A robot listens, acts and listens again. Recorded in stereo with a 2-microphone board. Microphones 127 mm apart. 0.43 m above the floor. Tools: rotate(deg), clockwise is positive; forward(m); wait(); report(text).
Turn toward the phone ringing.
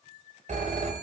rotate(60)
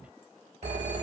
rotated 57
rotate(60)
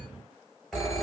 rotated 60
report("Facing the phone ringing.")